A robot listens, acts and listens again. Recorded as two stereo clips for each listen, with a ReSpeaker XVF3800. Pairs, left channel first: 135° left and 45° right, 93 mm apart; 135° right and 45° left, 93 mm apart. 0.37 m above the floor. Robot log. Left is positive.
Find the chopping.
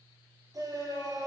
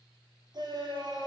cmd idle
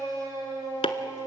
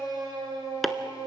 note: The chopping: 135° left.
cmd yaw +135
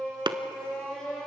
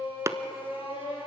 note: The chopping is now 10° right.
cmd yaw -10
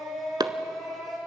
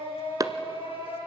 end: Found it: chopping, straight ahead, under 1 m away.